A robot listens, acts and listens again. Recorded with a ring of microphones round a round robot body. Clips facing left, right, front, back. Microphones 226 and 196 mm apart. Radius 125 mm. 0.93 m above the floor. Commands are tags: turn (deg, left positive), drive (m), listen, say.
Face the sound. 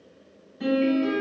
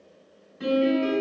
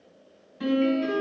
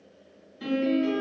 <say>Found it: a piano, straight ahead.</say>